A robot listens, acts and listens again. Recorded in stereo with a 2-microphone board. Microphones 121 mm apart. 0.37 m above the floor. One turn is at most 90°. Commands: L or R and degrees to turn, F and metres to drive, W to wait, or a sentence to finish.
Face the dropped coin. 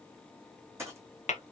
R25
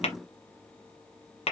W
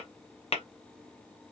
I heard a dropped coin, but can't make it out now. It was about straight ahead or 130° right.